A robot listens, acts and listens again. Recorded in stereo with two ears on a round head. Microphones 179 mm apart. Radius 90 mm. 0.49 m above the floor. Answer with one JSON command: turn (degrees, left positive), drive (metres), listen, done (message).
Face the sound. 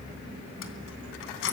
{"turn": 70}
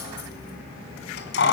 {"turn": 60}
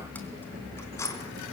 {"turn": 15}
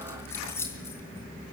{"listen": true}
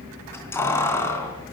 {"turn": 15}
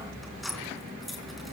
{"done": "Found it: keys jangling, straight ahead, 2 to 4 m away."}